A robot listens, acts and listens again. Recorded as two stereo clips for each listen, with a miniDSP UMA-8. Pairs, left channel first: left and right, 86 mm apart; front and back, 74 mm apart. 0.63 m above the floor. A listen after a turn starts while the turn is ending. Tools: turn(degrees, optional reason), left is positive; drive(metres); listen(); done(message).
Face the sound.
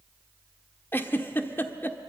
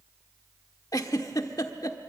turn(degrees=25, reason="The giggle: 25° left.")
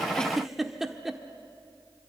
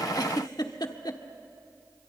done("Found it: a giggle, straight ahead.")